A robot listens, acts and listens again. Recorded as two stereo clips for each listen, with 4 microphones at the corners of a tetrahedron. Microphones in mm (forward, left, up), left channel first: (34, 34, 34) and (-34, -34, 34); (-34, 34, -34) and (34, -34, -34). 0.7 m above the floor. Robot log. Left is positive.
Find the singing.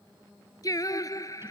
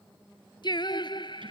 note: The singing: 100° left.
cmd yaw +100
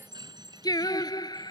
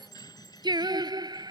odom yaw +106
end: Found it: singing, straight ahead.